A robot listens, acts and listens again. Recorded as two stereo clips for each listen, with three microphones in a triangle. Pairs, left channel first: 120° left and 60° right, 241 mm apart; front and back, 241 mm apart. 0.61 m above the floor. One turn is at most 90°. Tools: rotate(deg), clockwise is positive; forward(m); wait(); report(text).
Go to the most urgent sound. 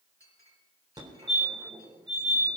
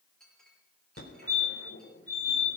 rotate(-10)
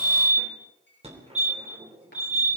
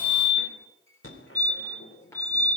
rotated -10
forward(1.0)
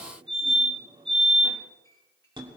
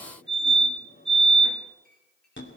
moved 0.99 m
forward(1.0)
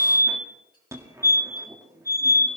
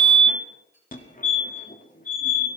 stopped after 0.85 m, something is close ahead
rotate(-10)
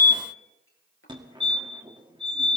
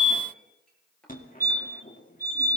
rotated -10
report("I am next to the fire alarm.")